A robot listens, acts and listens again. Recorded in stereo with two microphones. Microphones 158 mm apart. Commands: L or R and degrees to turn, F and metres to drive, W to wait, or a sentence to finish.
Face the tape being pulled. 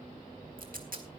R70
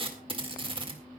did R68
R40
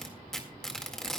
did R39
Found it: tape being pulled, straight ahead.